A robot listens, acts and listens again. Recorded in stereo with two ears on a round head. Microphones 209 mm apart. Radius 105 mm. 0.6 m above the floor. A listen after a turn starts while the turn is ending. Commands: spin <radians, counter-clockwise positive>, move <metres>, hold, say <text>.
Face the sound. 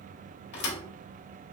spin 0.87
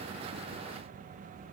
hold
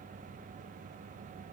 say I heard a thud, but can't make it out now. It was about straight ahead or 80° left.